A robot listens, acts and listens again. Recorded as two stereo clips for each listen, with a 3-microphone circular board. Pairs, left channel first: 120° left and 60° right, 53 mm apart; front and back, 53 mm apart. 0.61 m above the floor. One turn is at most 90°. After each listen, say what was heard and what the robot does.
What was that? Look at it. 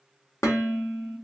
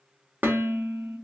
The dishes clattering: 125° left. Turn 90° left.
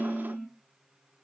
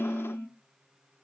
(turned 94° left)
The dishes clattering is now 30° left. Turn 30° left.
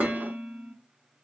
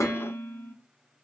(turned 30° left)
Found it: dishes clattering, straight ahead.